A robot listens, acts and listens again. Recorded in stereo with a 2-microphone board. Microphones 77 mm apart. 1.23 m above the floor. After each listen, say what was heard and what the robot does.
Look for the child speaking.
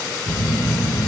Keep listening.
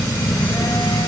Keep listening.
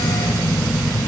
I can't make out a child speaking to turn to.